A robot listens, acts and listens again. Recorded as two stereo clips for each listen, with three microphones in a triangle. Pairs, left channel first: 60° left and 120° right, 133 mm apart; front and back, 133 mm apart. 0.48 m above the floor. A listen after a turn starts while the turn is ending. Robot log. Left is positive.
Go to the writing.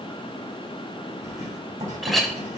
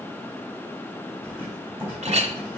note: The writing: 110° right.
cmd yaw -110
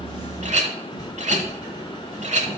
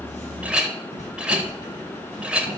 cmd fwd 1.0
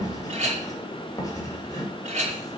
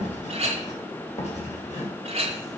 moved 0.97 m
cmd fwd 1.0
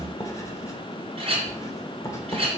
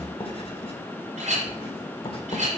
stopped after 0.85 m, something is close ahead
end: I am next to the writing.